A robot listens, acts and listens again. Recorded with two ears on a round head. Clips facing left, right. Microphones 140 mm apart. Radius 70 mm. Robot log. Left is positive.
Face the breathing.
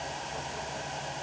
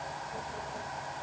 cmd idle
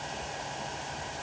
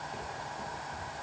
cmd idle
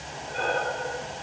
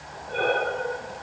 note: The breathing: about 55° right or 125° right.
cmd yaw -55
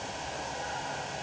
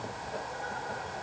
cmd idle
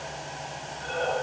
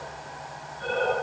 note: So it is at 70° right.
cmd yaw -70
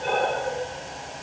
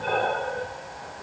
note: The breathing is now 10° left.
cmd yaw +10
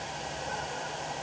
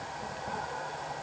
cmd idle
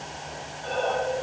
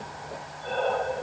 end: Found it: breathing, straight ahead, 2 to 4 m away.